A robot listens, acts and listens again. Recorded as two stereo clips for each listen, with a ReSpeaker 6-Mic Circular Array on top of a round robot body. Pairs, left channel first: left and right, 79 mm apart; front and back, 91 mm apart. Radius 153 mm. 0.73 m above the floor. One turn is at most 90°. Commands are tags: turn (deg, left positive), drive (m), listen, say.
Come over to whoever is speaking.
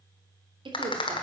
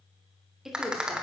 <turn deg="-90"/>
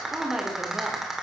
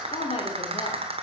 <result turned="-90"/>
<turn deg="-10"/>
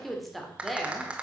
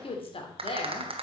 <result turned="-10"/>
<drive m="1.0"/>
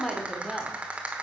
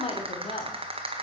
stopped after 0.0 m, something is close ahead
<say>Something is in my way. I am facing the woman speaking but have not reached it.</say>